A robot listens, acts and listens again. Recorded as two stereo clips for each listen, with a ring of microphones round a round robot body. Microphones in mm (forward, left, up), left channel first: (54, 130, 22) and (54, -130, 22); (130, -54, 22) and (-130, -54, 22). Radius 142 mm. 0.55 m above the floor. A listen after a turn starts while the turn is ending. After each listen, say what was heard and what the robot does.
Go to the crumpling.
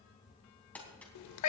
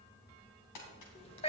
Drive 1.0 m forward.
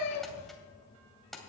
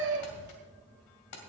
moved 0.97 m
Drive 1.0 m forward.
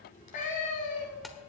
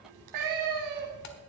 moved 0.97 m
Keep listening.
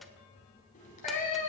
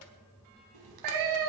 Keep listening.
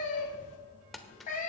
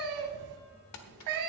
Drive 1.0 m forward.
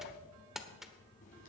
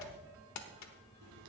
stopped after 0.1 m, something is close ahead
Arrived at the crumpling, straight ahead.